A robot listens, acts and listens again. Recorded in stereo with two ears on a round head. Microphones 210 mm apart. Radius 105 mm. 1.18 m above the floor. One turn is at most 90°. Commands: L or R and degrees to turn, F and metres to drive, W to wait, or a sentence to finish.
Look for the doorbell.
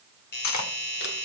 L45
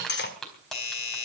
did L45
L90
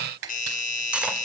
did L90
L35
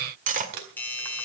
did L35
L10
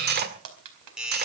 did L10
Found it: a doorbell, straight ahead, over 4 m away.